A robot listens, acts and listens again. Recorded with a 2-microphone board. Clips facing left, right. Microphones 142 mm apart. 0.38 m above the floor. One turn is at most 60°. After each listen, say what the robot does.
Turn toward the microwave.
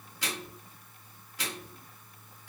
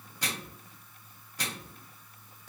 Turn 40° right.
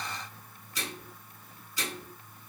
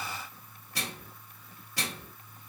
Turn 60° right.
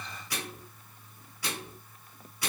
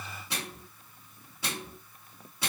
Turn 25° right.
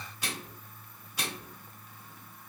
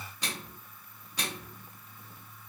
Found it: a microwave, straight ahead, 2 to 4 m away.